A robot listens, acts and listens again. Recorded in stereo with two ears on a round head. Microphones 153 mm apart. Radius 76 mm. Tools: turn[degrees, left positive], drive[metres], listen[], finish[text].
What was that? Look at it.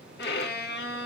Thought: The violin: about 65° left or 115° left.
Action: turn[65]
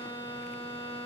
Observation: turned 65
Thought: So it is at 15° left.
Action: turn[15]
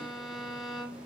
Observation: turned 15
Action: finish[Found it: a violin, straight ahead.]